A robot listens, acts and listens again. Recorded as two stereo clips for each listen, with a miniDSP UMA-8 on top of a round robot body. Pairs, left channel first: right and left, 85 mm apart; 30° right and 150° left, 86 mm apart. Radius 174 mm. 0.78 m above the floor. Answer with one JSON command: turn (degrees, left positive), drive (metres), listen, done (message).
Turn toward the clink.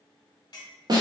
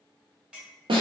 {"turn": -130}
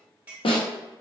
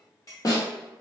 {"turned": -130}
{"turn": 20}
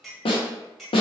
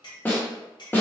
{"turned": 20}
{"done": "Found it: a clink, straight ahead."}